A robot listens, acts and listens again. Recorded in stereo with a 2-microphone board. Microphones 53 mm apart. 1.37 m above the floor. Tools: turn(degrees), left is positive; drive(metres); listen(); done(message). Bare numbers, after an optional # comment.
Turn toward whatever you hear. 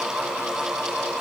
listen()
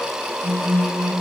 # The phone buzzing: about 70° right or 110° right.
turn(-70)
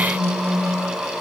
# So it is at 40° right.
turn(-40)
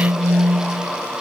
# The phone buzzing is now 20° right.
turn(-20)
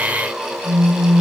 done("Facing the phone buzzing.")